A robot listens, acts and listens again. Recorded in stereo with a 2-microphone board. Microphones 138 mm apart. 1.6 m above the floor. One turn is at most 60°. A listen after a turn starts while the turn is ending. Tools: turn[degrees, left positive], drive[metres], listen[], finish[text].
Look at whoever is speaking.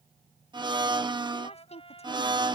Thought: The woman speaking: about 55° left or 125° left.
Action: turn[55]
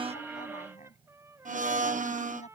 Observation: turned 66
Thought: So it is at 65° left.
Action: turn[60]
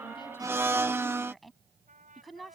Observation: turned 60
Action: finish[Found it: a woman speaking, straight ahead.]